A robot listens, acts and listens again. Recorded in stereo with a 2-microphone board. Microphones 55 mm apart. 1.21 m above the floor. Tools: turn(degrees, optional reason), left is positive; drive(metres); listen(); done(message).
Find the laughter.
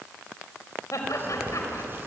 turn(degrees=75, reason="The laughter: about 75° left or 105° left.")
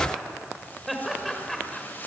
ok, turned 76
done("Found it: laughter, straight ahead, over 4 m away.")